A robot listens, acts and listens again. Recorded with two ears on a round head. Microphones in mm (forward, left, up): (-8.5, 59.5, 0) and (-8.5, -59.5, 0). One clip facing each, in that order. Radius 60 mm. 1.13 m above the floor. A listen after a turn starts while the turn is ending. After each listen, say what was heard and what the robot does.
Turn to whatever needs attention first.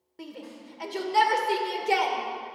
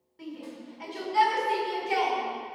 The shout: about 65° left or 115° left. Turn 65° left.
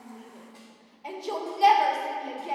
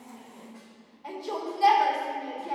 So it is at 25° left. Turn 25° left.
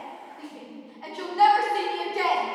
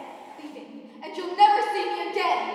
The shout is now 15° right. Turn 15° right.
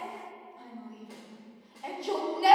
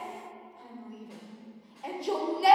Found it: a shout, straight ahead.